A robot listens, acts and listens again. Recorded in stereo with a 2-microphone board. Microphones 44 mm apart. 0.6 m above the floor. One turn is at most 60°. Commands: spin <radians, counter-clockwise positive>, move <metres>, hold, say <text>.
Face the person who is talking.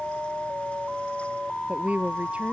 spin -0.52
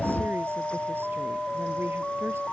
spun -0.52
hold
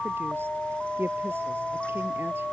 spin -1.05
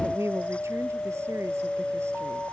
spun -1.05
spin -1.05
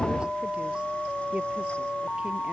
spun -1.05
spin -0.52
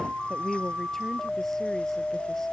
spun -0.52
spin 0.17
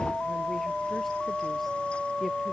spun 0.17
hold
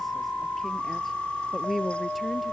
say Facing the woman speaking.